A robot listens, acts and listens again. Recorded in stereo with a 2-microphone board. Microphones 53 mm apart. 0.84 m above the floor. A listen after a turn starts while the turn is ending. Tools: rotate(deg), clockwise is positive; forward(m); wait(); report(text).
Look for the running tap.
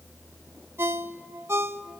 wait()
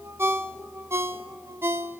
wait()
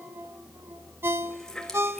rotate(-30)
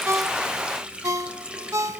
rotate(20)
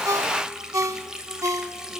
rotate(10)
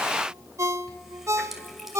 report("Found it: a running tap, straight ahead.")